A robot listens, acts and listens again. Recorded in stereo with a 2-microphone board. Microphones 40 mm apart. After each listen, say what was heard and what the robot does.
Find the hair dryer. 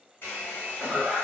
The hair dryer: about 60° left or 120° left. Turn 60° left.
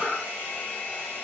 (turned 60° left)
So it is at 60° left. Turn 60° left.
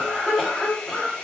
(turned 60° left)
The hair dryer is now 25° left. Turn 25° left.
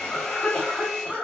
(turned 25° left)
The hair dryer is now 15° left. Turn 15° left.
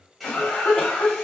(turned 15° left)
Keep listening.
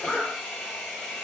Found it: a hair dryer, straight ahead, under 1 m away.